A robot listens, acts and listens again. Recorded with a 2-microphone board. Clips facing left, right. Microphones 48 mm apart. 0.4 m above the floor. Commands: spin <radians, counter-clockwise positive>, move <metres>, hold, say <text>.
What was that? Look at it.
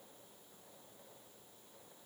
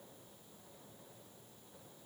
hold
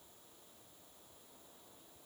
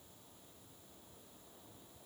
hold
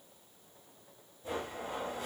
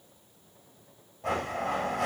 spin -1.22
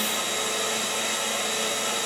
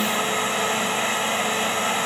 spin -0.61
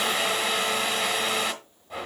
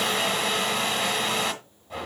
say Found it: a blender, straight ahead.